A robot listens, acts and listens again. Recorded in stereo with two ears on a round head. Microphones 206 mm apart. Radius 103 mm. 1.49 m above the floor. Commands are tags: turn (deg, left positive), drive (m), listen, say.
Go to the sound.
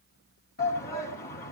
<turn deg="45"/>
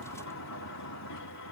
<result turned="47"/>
<listen/>
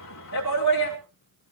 <turn deg="90"/>
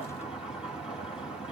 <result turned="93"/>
<drive m="1.0"/>
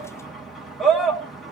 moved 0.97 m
<drive m="1.0"/>
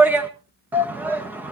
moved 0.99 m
<turn deg="-10"/>
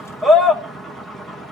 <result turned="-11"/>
<drive m="1.0"/>
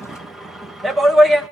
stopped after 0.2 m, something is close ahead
<say>I am next to the shout.</say>